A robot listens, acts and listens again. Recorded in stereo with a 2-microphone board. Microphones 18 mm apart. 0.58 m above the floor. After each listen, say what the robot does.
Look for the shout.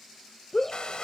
Turn 15° left.
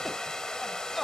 Found it: a shout, straight ahead.